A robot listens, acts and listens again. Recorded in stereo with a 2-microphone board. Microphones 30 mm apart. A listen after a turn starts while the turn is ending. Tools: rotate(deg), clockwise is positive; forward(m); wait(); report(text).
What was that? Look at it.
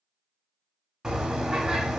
rotate(20)
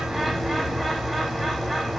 report("Facing the bird.")